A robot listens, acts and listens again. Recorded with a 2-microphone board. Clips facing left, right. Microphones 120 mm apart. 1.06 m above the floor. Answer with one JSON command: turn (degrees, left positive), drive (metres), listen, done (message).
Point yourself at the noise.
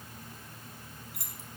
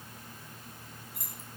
{"turn": 90}
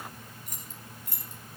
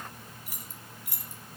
{"turn": -10}
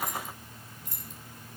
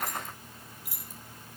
{"turn": -10}
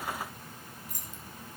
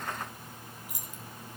{"turn": -10}
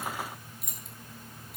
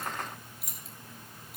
{"done": "Facing the keys jangling."}